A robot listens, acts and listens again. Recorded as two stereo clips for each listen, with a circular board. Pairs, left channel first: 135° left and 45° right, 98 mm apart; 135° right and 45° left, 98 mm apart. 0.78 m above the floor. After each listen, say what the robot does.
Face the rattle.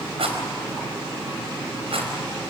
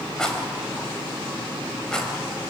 Turn 55° right.
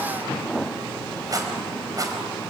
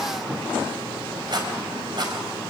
Found it: a rattle, straight ahead.